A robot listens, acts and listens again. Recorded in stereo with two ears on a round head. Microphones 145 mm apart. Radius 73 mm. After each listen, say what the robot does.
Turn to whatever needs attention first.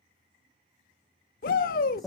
Turn 55° left.
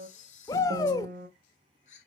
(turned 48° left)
Turn 25° left.
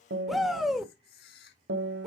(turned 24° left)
Facing the shout.